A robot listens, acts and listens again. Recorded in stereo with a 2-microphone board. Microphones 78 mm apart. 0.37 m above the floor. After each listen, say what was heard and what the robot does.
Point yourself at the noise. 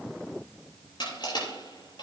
The crushing: about 70° left or 110° left. Turn 70° left.
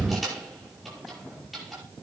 Facing the crushing, over 4 m away.